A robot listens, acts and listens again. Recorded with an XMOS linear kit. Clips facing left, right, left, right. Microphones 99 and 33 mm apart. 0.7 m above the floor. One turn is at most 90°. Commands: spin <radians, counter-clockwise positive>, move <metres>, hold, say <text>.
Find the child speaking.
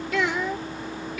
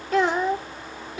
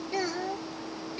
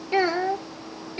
spin -0.52
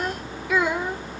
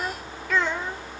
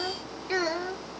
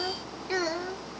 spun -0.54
spin 0.26
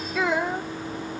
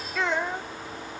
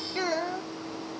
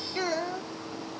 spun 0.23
spin 0.17
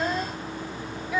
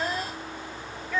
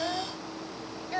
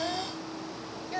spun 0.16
spin 0.17
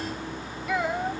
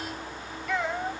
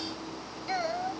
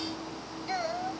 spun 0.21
say Found it: a child speaking, straight ahead.